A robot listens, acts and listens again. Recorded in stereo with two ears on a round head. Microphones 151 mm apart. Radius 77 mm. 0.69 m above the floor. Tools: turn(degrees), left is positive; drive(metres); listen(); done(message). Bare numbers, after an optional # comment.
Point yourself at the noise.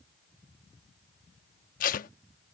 # The tape being pulled: about 55° left or 125° left.
turn(55)
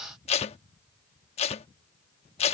# So it is at 45° left.
turn(45)
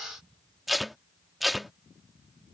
done("Facing the tape being pulled.")